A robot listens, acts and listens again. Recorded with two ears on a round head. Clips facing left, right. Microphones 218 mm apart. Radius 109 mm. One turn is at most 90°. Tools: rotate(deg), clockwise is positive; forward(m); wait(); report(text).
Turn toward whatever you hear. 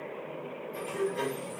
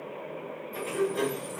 rotate(70)
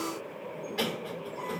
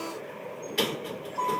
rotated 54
rotate(55)
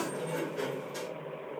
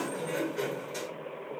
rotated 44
report("Facing the sliding door, 1 to 2 m away.")